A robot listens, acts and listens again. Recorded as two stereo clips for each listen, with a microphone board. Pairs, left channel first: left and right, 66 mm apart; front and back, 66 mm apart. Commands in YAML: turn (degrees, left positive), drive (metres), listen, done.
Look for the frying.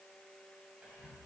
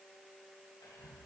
listen: true
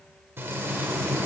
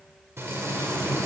turn: -135
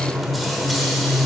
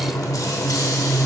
done: "Found it: frying, straight ahead, 1 to 2 m away."